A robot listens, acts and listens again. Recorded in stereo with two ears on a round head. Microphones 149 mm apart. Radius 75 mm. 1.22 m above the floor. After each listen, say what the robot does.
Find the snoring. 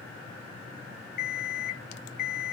Keep listening.
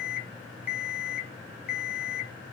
Keep listening.
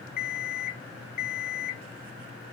I can't make out snoring to turn to.